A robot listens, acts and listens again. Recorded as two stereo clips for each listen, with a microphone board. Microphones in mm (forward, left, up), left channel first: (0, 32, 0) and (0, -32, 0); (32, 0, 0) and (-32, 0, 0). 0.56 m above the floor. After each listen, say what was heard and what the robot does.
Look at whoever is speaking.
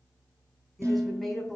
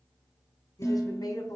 Found it: a woman speaking, straight ahead, over 4 m away.